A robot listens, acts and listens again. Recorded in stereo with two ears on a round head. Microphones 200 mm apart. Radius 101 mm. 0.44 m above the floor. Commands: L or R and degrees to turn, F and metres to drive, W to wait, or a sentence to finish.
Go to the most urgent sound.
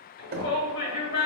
L60
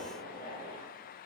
W
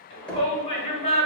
L30
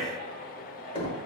L10
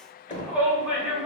F1.0
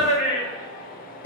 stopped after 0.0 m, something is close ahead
Blocked. The shout is further on, straight ahead.